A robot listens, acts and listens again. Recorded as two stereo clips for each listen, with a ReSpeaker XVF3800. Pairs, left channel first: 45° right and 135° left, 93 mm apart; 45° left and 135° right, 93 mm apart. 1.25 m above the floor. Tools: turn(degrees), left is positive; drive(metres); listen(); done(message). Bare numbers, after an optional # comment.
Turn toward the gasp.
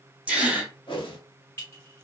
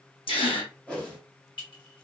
# The gasp: 60° left.
turn(60)
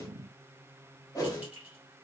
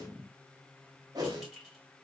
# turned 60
done("I heard a gasp from this way, but can't make it out now.")